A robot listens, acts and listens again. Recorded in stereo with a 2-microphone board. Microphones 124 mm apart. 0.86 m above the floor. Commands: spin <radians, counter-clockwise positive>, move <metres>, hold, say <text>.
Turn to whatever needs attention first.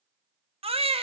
spin -0.87
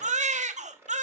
spin -1.31
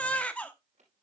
spin 0.17
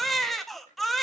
say Found it: a baby crying, straight ahead.